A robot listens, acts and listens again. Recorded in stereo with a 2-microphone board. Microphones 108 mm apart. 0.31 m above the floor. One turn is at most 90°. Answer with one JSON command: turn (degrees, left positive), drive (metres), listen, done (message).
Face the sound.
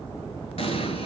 {"turn": 70}
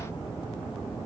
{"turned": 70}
{"listen": true}
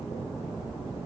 {"done": "I heard an explosion, but can't make it out now. It was about straight ahead or 40° left."}